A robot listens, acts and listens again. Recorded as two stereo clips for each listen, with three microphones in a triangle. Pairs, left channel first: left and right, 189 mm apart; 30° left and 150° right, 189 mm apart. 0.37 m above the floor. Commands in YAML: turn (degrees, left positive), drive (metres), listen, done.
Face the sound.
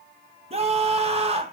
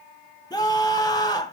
turn: -40
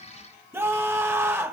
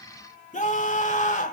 turn: -15
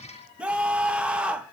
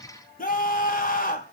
done: "Facing the scream, 1 to 2 m away."